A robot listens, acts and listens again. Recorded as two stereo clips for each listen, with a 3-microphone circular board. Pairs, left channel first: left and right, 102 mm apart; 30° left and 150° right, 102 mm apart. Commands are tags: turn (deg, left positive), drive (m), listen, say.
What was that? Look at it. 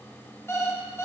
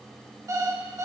<turn deg="155"/>
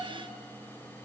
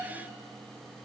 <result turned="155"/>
<listen/>
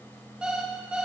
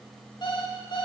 <turn deg="-10"/>
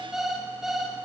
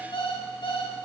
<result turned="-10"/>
<say>Found it: an alarm clock, straight ahead, 1 to 2 m away.</say>